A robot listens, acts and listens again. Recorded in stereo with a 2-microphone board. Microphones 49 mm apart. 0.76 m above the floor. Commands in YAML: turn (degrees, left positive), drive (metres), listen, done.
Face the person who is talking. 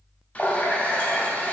listen: true
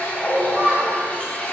turn: -45
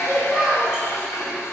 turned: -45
done: "Facing the child speaking, 2 to 4 m away."